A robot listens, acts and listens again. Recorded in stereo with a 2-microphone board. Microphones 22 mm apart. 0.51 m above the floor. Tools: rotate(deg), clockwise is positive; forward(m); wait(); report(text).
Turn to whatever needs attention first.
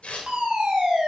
rotate(40)
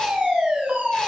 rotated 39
rotate(95)
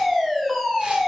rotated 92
report("Found it: a fire alarm, straight ahead.")